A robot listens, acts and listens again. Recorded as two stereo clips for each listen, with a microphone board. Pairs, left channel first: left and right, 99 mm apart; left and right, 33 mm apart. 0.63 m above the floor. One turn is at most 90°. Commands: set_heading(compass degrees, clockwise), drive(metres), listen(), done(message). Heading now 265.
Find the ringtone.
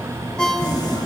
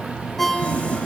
set_heading(235)
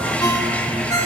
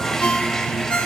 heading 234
set_heading(144)
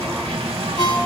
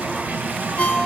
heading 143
set_heading(93)
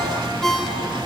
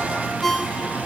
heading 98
done("Facing the ringtone, 1 to 2 m away.")